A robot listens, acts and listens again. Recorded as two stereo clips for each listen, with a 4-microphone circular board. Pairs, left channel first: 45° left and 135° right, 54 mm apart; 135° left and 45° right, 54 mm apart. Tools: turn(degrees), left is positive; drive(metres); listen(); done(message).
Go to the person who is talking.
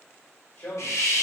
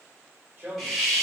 drive(metres=1.0)
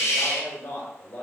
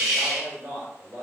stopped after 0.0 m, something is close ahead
done("Something is in my way. I am facing the man speaking but have not reached it.")